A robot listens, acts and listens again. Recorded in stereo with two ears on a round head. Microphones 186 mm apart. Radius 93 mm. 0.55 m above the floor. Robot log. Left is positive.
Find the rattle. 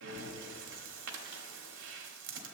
cmd idle
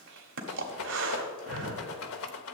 cmd yaw +90
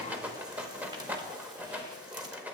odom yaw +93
note: So it is at 10° right.
cmd yaw -10
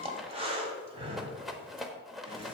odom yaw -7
end: Facing the rattle.